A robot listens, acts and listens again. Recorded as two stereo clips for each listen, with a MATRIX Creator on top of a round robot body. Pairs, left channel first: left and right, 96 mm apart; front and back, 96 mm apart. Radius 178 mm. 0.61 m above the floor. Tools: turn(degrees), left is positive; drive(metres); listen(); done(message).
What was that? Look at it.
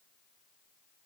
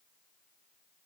listen()
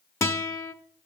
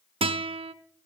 turn(degrees=155)
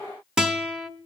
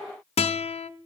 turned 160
done("Facing the guitar.")